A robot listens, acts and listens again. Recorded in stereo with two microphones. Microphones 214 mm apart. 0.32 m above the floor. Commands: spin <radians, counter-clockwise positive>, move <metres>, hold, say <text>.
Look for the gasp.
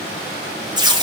hold
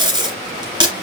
hold
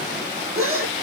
spin -1.57
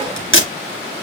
say I heard a gasp from this way, but can't make it out now.